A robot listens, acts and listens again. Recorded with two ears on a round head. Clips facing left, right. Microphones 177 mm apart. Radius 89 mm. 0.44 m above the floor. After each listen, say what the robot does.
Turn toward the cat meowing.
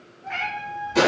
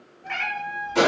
Turn 65° right.
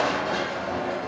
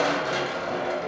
Keep listening.
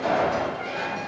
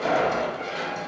Keep listening.
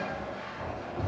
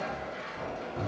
I heard a cat meowing, but can't make it out now. It was about straight ahead or 50° right.